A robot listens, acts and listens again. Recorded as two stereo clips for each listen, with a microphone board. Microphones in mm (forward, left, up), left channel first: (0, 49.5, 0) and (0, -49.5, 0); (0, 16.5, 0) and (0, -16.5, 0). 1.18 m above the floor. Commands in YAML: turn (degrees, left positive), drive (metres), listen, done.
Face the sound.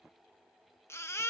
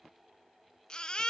turn: 25
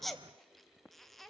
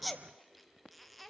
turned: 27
done: "Found it: a baby crying, straight ahead, 1 to 2 m away."